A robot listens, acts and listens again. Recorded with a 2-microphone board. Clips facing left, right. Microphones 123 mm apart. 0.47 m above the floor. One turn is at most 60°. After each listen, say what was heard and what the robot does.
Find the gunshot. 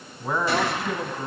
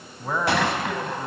The gunshot: about 70° right or 110° right. Turn 60° right.
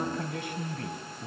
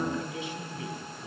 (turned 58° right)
Keep listening.
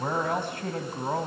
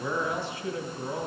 I heard a gunshot, but can't make it out now. It was about 15° right or 50° right.